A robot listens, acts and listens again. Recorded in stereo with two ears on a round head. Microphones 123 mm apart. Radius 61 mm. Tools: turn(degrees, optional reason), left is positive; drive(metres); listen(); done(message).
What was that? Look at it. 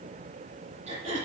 turn(degrees=-50, reason="The throat clearing: about 50° right or 130° right.")
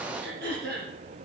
turn(degrees=-80, reason="So it is at 80° right.")
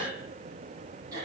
turn(degrees=-30, reason="The throat clearing is now 30° right.")
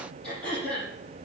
done("Facing the throat clearing, over 4 m away.")